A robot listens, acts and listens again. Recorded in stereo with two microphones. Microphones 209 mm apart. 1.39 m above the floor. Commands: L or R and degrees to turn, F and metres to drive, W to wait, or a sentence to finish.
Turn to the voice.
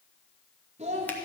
R30
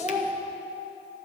R10
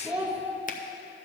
Facing the child speaking.